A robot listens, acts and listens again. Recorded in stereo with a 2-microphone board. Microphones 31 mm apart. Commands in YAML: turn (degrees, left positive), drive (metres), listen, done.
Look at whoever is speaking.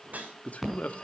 turn: 50
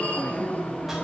listen: true
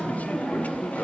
listen: true
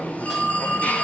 done: "I heard a man speaking, but can't make it out now. It was about straight ahead or 80° left."